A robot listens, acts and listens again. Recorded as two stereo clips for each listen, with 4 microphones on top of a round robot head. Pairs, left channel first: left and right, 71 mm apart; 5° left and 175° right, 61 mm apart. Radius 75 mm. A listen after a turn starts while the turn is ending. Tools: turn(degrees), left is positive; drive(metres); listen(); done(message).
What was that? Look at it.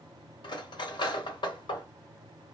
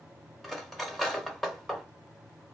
turn(degrees=90)
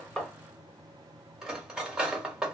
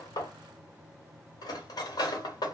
turn(degrees=-10)
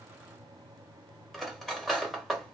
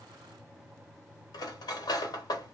done("Facing the cutlery clinking.")